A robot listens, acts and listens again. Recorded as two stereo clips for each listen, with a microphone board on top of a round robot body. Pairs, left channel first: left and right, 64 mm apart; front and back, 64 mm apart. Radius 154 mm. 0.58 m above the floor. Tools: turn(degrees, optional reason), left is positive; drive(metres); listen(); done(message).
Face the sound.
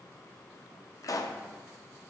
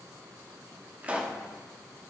turn(degrees=110, reason="The pop: 110° left.")
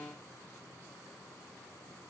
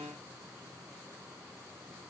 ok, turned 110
done("I heard a pop from this way, but can't make it out now.")